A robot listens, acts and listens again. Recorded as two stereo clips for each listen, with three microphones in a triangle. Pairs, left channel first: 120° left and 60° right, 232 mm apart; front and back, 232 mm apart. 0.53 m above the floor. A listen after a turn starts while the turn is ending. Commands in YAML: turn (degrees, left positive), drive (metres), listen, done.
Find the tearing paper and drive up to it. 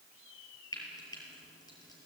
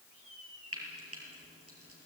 listen: true
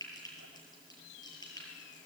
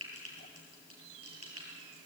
listen: true
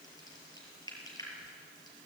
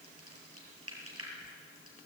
done: "I can't make out tearing paper to turn to."